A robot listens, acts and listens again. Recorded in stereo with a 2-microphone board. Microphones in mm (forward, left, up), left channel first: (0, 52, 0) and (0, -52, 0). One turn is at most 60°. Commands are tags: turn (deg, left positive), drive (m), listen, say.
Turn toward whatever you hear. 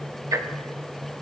<turn deg="-35"/>
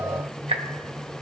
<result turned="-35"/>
<turn deg="-60"/>
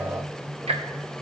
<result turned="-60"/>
<turn deg="-60"/>
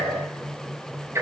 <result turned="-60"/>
<turn deg="-25"/>
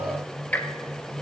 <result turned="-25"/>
<turn deg="15"/>
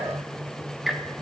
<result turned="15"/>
<say>Facing the ticking, under 1 m away.</say>